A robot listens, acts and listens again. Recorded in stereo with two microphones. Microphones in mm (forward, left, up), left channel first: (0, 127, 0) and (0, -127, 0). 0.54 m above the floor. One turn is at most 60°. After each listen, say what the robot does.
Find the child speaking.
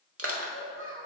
Turn 15° right.
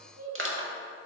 Turn 30° right.
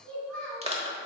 Found it: a child speaking, straight ahead.